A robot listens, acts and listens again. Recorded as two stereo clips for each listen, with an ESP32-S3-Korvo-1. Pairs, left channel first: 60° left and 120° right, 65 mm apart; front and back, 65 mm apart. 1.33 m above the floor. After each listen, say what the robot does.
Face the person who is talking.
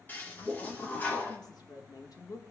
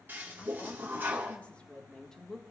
Turn 85° left.
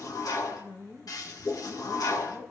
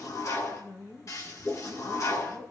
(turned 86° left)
Turn 45° left.
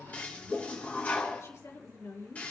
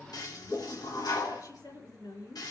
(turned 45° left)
Turn 15° left.
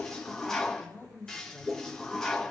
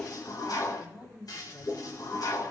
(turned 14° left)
Facing the woman speaking, 2 to 4 m away.